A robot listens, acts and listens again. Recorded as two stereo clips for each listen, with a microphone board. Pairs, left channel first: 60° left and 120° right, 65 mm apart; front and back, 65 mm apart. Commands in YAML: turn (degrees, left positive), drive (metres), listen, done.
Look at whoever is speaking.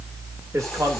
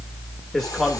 turn: -85
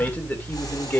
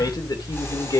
done: "Found it: a man speaking, straight ahead."